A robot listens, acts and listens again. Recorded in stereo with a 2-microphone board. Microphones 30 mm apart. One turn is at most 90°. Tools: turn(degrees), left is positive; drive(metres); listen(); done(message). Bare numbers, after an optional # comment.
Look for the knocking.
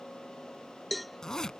listen()
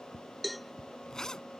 listen()
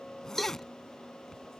done("I can't make out knocking, only a zipper and a cowbell.")